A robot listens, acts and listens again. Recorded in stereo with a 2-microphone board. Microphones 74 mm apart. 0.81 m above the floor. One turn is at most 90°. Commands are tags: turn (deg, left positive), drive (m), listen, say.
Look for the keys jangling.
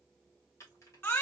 <turn deg="40"/>
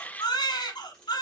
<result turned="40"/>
<turn deg="10"/>
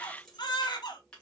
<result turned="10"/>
<turn deg="15"/>
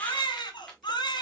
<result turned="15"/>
<say>Found it: keys jangling, straight ahead, 1 to 2 m away.</say>